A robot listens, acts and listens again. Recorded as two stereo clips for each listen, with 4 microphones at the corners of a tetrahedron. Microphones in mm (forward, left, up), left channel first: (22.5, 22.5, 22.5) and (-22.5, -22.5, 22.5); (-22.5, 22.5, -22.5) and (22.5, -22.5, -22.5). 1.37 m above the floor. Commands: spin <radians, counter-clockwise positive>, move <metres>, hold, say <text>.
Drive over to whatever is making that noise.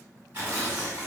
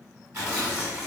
spin -1.40
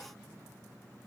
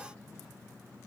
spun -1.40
hold
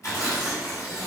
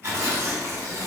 move 1.0
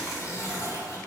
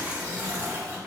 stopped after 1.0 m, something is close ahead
spin 0.35
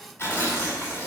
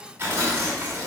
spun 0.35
say I am next to the tearing paper.